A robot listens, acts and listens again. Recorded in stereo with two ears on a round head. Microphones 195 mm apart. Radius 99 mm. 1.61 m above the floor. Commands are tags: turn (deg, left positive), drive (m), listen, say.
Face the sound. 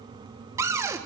<turn deg="-30"/>
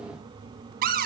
<turn deg="-135"/>
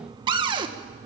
<turn deg="-20"/>
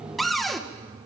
<say>Facing the cupboard door.</say>